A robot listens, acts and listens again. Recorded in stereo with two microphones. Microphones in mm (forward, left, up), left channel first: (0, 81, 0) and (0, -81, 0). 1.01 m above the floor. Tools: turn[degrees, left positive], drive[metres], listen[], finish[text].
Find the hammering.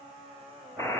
Action: listen[]
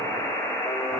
Action: listen[]
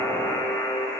Action: finish[I can't make out hammering, only a buzzer.]